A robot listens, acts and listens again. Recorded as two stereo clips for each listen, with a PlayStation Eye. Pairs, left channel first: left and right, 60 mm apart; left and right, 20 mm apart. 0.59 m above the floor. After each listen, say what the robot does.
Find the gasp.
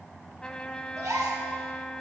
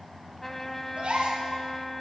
Turn 90° right.
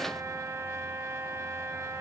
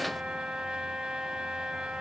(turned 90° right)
Facing where the gasp came from. I can't hear it now.